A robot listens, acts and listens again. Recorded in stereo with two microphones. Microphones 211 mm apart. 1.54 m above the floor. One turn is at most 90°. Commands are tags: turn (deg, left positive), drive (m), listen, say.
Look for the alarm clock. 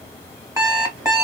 <turn deg="-15"/>
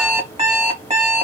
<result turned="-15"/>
<turn deg="-90"/>
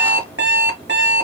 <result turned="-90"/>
<turn deg="-85"/>
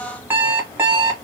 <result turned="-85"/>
<turn deg="-10"/>
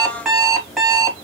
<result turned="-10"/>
<say>Found it: an alarm clock, straight ahead, 1 to 2 m away.</say>